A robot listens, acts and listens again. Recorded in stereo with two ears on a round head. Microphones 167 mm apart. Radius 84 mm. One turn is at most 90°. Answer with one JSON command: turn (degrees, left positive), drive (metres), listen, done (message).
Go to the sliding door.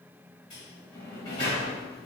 {"turn": 20}
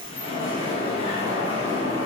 {"turn": 90}
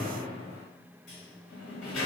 {"turn": 70}
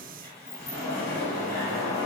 {"turn": 15}
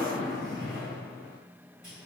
{"drive": 1.0}
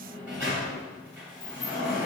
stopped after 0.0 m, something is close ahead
{"done": "Something is in my way. I am facing the sliding door but have not reached it."}